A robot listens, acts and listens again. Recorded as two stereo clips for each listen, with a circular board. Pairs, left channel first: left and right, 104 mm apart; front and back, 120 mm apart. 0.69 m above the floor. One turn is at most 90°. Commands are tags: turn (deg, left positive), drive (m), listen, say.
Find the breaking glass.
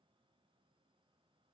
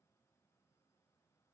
<listen/>
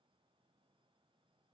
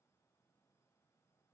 <listen/>
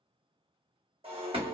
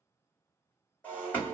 <turn deg="-80"/>
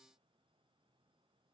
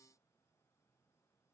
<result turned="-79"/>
<say>I heard breaking glass from this way, but can't make it out now.</say>